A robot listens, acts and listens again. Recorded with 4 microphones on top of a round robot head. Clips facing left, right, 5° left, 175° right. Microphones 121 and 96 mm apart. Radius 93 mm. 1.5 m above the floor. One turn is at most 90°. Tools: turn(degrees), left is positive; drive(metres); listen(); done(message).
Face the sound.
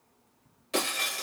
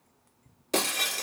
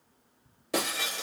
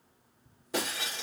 turn(degrees=-50)
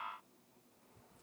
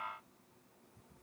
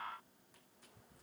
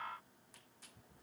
done("Facing where the breaking glass came from. I can't hear it now.")